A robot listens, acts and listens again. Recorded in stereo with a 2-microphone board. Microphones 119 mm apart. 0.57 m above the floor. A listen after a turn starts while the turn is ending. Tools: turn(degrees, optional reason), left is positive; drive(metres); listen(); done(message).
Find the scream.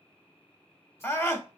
turn(degrees=25, reason="The scream: about 25° left or 155° left.")
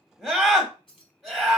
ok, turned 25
done("Found it: a scream, straight ahead.")